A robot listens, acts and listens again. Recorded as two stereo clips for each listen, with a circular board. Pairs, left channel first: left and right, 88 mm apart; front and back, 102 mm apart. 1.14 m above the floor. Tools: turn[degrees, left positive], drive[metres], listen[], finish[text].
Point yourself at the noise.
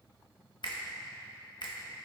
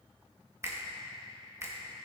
Thought: The finger snap: 120° left.
Action: turn[120]
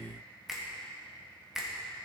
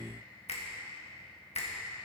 Action: finish[Found it: a finger snap, straight ahead, 1 to 2 m away.]